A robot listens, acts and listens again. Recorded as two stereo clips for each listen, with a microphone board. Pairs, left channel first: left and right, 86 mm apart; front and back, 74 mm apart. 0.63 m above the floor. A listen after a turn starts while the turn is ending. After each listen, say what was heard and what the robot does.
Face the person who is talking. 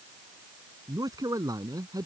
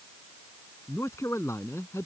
The man speaking: 50° right. Turn 50° right.
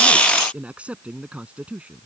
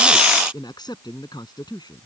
The man speaking is now 15° right. Turn 15° right.
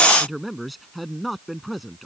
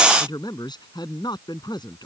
Facing the man speaking.